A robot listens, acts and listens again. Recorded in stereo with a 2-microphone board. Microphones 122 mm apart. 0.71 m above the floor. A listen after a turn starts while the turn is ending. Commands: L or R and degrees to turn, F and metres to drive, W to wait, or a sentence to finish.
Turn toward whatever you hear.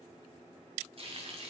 R50
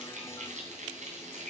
R80
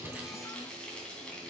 Found it: frying, straight ahead, 2 to 4 m away.